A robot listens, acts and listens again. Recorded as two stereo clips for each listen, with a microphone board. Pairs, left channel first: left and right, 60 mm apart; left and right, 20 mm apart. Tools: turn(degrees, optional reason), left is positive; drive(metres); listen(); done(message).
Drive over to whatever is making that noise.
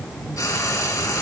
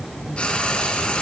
turn(degrees=90)
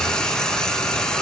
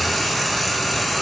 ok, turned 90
turn(degrees=15, reason="So it is at 15° left.")
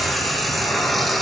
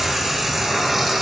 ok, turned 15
drive(metres=1.0)
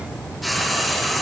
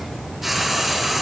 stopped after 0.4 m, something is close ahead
done("Something is in my way. I am facing the frying but have not reached it.")